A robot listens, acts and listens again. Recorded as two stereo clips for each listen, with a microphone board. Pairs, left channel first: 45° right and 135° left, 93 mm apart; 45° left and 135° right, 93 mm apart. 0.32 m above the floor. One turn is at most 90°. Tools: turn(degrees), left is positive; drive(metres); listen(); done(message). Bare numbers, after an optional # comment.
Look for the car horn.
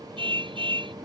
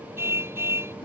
# The car horn: 160° left.
turn(90)
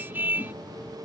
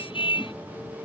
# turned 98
# The car horn is now 65° left.
turn(65)
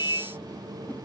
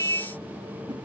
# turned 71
done("Found it: a car horn, straight ahead.")